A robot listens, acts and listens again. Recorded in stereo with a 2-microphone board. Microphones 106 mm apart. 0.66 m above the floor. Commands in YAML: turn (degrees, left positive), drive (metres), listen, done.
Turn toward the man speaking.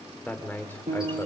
turn: 20
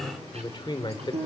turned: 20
turn: 135
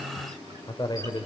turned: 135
turn: 40
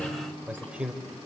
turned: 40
turn: -10
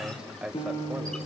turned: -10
turn: -10
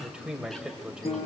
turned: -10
turn: -10
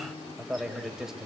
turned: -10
done: "Facing the man speaking, 2 to 4 m away."